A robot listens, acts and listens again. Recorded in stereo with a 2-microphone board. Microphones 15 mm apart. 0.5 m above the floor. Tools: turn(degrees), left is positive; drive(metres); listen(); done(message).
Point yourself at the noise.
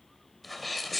turn(degrees=30)
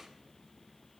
listen()
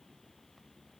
done("I heard a sneeze, but can't make it out now. It was about 25° right or 145° left.")